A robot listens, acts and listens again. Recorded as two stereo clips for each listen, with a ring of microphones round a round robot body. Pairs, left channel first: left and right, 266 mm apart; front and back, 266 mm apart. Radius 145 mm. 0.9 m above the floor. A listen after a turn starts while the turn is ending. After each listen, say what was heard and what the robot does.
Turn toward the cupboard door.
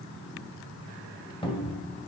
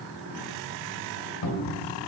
The cupboard door: 20° left. Turn 20° left.
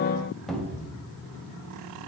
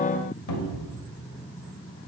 Found it: a cupboard door, straight ahead, 1 to 2 m away.